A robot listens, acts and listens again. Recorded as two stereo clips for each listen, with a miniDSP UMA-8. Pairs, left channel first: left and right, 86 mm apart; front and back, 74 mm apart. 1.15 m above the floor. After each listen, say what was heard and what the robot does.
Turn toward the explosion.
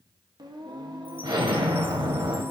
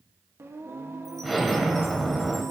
The explosion: 85° right. Turn 85° right.
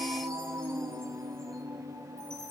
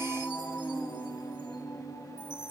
Facing where the explosion came from. I can't hear it now.